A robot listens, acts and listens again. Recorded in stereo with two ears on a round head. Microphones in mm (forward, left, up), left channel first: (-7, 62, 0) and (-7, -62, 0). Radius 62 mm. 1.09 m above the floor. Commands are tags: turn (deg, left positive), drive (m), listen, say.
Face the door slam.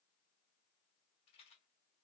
<listen/>
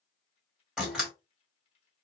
<turn deg="-30"/>
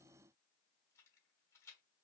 <listen/>
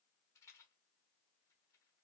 <say>I heard a door slam, but can't make it out now. It was about 25° left or 145° right.</say>